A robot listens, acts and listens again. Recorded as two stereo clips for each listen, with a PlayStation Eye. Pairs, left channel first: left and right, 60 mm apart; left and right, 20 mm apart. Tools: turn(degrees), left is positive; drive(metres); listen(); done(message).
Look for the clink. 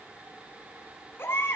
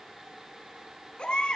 listen()
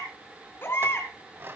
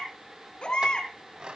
turn(degrees=-45)
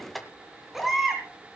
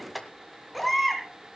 done("Found it: a clink, straight ahead, 2 to 4 m away.")